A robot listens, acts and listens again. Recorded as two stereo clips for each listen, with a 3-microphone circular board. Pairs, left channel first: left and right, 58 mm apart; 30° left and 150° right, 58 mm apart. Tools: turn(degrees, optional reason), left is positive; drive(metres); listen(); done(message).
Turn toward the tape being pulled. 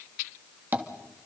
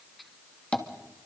listen()
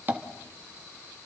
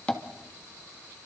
listen()
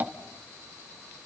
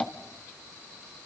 done("I can't make out tape being pulled, only tapping.")